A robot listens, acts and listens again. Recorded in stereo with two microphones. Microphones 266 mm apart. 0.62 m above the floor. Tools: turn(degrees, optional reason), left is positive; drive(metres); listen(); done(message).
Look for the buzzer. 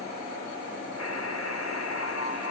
turn(degrees=70, reason="The buzzer: about 70° left or 110° left.")
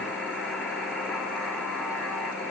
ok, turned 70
done("Facing the buzzer, 2 to 4 m away.")